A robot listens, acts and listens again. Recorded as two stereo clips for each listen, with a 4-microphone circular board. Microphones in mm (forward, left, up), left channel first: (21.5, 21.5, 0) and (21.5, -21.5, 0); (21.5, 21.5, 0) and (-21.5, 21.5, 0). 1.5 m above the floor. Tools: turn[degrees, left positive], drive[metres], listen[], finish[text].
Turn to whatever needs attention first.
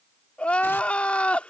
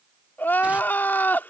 Thought: The crying: 35° left.
Action: turn[35]
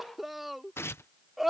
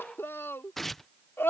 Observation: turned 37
Action: finish[Facing the crying.]